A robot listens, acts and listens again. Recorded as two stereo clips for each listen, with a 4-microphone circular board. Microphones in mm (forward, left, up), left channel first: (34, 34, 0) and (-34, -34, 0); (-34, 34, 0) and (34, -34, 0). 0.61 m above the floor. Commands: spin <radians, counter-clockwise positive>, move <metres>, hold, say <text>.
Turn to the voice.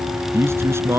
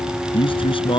spin 2.79
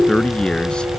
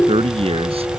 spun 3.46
spin -0.61
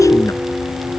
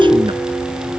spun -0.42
spin -0.26
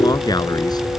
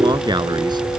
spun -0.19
say Facing the man speaking.